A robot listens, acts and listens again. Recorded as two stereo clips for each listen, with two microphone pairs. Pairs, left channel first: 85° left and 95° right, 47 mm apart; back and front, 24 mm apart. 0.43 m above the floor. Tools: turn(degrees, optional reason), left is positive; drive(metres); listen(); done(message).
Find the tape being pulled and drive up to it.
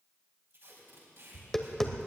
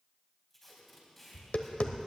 turn(degrees=-110, reason="The tape being pulled: 110° right.")
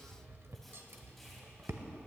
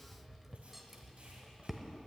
listen()
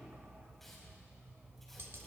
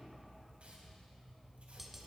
listen()
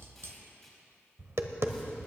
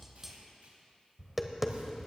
drive(metres=1.0)
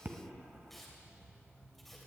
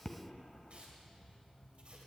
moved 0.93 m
listen()
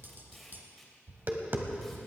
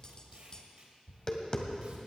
listen()
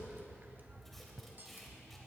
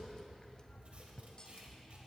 done("Facing where the tape being pulled came from. I can't hear it now. I did not reach it.")